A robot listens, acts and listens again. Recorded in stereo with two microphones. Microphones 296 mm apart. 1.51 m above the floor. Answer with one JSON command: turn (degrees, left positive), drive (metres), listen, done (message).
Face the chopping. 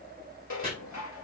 {"turn": -30}
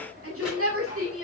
{"listen": true}
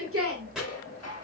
{"done": "Found it: chopping, straight ahead, over 4 m away."}